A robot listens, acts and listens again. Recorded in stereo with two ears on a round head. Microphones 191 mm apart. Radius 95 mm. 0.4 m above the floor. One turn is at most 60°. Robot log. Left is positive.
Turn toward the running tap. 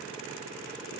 cmd idle
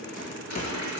cmd yaw +60
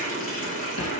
note: So it is at 40° left.
cmd yaw +40
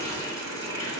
note: The running tap is now 15° left.
cmd yaw +15
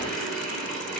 end: Found it: a running tap, straight ahead, 2 to 4 m away.